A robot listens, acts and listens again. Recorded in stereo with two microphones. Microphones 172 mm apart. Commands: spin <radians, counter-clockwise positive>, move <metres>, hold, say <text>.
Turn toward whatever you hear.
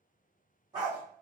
spin -0.44
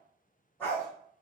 spin 0.17
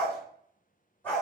spin 0.17
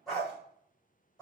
say Found it: a dog barking, straight ahead.